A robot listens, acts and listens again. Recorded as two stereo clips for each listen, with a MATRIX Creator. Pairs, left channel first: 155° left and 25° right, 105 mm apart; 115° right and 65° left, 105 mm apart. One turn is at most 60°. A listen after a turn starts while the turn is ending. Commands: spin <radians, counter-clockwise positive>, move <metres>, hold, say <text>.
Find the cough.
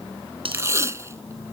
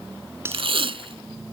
hold
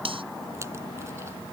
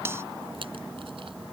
hold
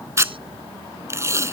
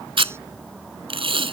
say I can't make out a cough, only tape being pulled.